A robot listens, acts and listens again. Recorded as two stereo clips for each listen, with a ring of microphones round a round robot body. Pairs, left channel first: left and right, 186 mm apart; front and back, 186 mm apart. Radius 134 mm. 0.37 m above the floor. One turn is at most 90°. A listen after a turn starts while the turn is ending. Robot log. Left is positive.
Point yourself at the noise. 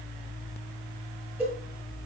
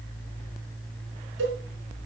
note: The cowbell: 175° right.
cmd yaw -90
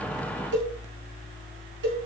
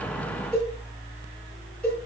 note: The cowbell is now 85° right.
cmd yaw -85
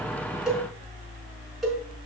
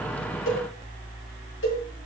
end: Found it: a cowbell, straight ahead, over 4 m away.